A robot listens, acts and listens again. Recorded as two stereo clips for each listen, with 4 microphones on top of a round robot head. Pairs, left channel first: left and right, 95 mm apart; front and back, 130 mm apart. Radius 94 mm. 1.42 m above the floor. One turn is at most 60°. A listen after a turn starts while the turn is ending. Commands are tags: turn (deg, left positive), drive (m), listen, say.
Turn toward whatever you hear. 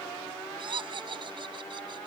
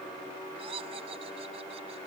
<turn deg="-60"/>
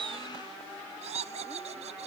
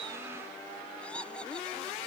<turn deg="-60"/>
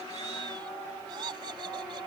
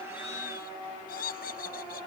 <turn deg="-30"/>
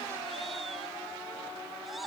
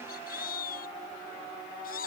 <say>Found it: laughter, straight ahead.</say>